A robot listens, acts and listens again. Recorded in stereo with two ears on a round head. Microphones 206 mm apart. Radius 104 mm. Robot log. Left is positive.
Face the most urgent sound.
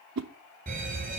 note: The alarm: about 40° right or 140° right.
cmd yaw -40
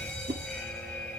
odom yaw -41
end: Facing the alarm.